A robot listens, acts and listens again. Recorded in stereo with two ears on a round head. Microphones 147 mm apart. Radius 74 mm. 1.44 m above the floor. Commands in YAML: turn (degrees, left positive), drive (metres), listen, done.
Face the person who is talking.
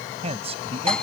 turn: -40
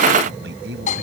turn: -105
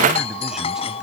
listen: true
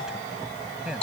done: "Facing the man speaking."